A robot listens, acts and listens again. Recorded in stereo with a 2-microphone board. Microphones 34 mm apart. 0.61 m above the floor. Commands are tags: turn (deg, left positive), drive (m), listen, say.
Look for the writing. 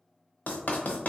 <turn deg="50"/>
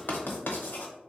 <turn deg="75"/>
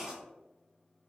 <turn deg="-10"/>
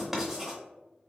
<say>Found it: writing, straight ahead, under 1 m away.</say>